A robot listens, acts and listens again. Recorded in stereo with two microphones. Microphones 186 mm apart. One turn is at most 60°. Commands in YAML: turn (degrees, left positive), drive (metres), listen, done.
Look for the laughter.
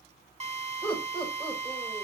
turn: 30
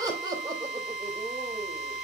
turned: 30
turn: -25
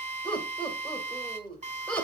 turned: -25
done: "Facing the laughter."